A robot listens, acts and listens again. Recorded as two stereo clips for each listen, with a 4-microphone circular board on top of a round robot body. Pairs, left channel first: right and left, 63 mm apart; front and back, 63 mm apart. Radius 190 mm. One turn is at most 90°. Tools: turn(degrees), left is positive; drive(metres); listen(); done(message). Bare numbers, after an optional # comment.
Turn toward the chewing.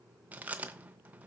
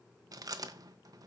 # The chewing: 155° left.
turn(90)
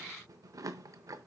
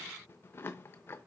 # The chewing is now 55° left.
turn(55)
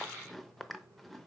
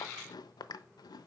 done("Facing the chewing.")